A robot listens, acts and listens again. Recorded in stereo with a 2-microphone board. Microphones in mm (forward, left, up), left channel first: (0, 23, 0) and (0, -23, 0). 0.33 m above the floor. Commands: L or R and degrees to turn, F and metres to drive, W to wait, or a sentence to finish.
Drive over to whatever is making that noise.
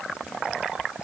W
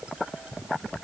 W
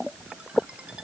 I can't make out anything to turn to.